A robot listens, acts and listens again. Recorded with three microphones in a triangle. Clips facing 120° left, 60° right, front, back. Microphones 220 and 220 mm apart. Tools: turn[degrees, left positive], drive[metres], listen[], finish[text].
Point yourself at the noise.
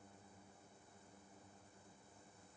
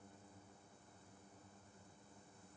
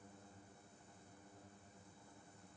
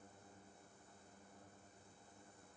Action: listen[]
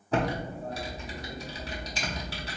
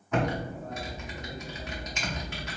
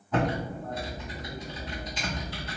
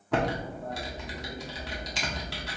Thought: The typing on a keyboard: straight behind.
Action: turn[180]
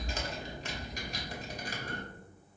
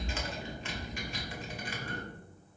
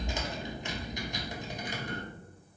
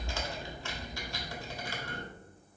Thought: The typing on a keyboard is now 75° left.
Action: turn[75]
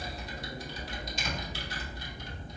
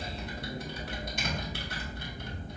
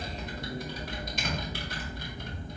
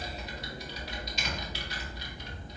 Thought: The typing on a keyboard is now 35° right.
Action: turn[-35]
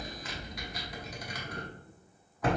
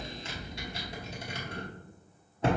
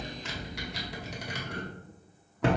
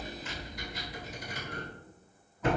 Action: finish[Found it: typing on a keyboard, straight ahead, under 1 m away.]